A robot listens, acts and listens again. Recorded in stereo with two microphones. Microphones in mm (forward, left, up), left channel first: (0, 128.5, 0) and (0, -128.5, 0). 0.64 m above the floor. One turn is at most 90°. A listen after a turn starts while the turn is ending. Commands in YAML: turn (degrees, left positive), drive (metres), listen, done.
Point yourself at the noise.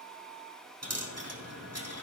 turn: -75
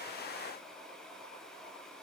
listen: true
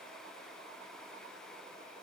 done: "I heard a dropped coin, but can't make it out now. It was about straight ahead or 30° right."